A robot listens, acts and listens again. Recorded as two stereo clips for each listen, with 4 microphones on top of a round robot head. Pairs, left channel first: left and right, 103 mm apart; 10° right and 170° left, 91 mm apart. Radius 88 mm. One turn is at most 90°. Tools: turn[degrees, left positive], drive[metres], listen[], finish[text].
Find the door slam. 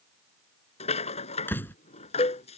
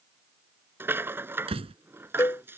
Thought: The door slam: 160° left.
Action: turn[90]
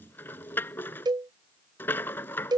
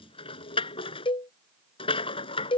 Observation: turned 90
Thought: Nothing new. It was at 70° left.
Action: turn[70]
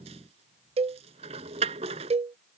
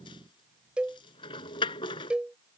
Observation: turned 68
Action: finish[I heard a door slam from this way, but can't make it out now.]